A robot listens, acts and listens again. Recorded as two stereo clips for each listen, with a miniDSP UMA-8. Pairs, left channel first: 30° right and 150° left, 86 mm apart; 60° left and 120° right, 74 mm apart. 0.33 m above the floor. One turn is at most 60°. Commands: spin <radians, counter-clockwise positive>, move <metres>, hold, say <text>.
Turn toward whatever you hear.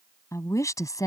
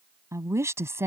spin -1.05
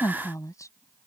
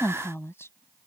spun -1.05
spin 0.17
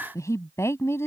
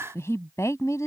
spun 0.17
spin 0.44
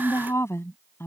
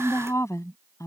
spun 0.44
spin 0.44
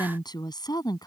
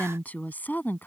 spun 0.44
say Facing the woman speaking.